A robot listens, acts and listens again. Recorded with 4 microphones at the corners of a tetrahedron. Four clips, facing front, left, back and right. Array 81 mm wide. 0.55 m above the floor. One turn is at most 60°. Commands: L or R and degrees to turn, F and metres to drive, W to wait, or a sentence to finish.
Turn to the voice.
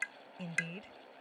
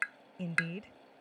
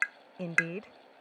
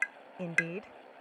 R60
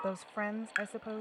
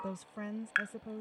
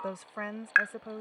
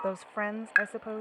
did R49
R60
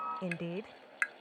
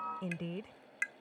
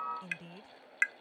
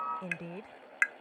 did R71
R15
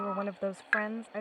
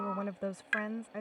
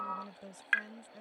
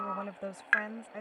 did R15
Found it: a woman speaking, straight ahead.